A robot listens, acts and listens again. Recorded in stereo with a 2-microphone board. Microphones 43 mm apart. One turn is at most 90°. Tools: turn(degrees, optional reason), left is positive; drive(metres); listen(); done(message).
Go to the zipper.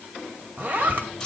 turn(degrees=-50, reason="The zipper: about 50° right or 130° right.")
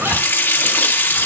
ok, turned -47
listen()
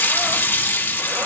listen()
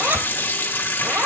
turn(degrees=-75, reason="So it is at 75° right.")
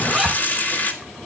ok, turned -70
drive(metres=1.0)
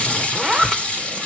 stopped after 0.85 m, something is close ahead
done("I am next to the zipper.")